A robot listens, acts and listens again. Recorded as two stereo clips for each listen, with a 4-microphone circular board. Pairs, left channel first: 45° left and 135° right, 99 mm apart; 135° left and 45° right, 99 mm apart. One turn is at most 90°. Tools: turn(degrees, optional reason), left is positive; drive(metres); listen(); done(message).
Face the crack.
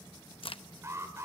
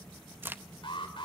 turn(degrees=25, reason="The crack: 25° left.")
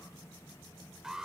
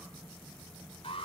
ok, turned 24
done("Facing where the crack came from. I can't hear it now.")